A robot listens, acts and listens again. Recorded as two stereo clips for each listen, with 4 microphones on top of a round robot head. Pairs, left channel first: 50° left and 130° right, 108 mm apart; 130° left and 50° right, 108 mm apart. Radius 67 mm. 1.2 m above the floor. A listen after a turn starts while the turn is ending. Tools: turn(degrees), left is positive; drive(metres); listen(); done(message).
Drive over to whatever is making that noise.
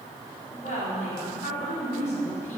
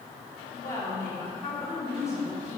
turn(degrees=70)
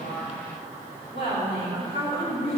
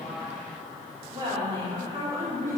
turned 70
turn(degrees=10)
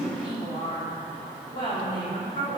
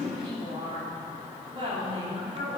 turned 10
drive(metres=1.0)
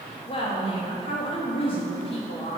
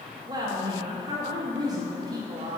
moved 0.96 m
turn(degrees=10)
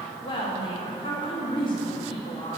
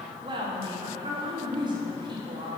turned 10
drive(metres=1.0)
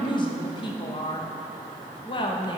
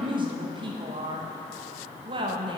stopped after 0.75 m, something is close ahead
done("Arrived at the woman speaking, straight ahead.")